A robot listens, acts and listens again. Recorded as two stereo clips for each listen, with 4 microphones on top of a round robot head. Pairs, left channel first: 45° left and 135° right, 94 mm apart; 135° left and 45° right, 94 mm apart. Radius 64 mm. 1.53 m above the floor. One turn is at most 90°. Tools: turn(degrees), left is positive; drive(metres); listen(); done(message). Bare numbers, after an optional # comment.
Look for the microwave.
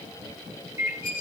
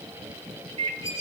# The microwave: 80° right.
turn(-80)
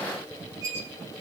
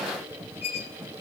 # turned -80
listen()
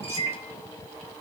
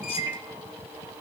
# The microwave is now 10° left.
turn(10)
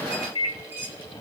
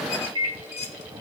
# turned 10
done("Found it: a microwave, straight ahead.")